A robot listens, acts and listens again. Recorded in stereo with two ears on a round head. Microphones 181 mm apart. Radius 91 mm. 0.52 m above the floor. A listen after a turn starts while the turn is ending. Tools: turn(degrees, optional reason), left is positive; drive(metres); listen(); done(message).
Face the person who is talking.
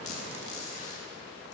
listen()
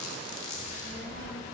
turn(degrees=-60, reason="The child speaking: about 60° right or 120° right.")
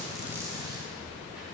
done("Found it: a child speaking, straight ahead.")